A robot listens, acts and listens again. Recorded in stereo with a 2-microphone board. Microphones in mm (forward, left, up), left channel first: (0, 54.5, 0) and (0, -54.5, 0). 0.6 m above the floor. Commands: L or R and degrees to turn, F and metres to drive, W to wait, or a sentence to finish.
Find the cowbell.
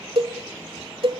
R55
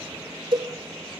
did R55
R55
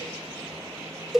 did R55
Facing the cowbell.